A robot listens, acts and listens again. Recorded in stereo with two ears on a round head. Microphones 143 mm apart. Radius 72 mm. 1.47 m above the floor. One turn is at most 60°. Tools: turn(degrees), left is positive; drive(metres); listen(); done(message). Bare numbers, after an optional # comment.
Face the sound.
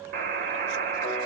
# The buzzer: about 55° right or 125° right.
turn(-55)
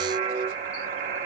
# So it is at 70° right.
turn(-60)
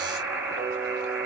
# The buzzer is now 10° right.
turn(-10)
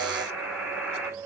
done("Found it: a buzzer, straight ahead, 2 to 4 m away.")